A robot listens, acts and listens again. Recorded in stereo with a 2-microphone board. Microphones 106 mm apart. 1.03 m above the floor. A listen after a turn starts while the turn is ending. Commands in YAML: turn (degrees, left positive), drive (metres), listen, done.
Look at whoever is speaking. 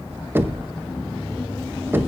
listen: true
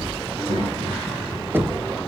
turn: -90
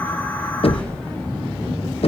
listen: true
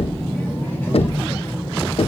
turn: 25
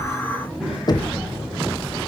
done: "Facing the child speaking."